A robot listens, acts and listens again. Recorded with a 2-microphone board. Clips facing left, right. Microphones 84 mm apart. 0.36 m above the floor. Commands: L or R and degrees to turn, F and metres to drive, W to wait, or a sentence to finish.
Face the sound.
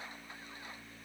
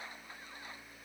W
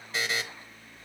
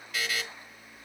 L30
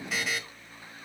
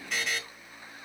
Facing the buzzer.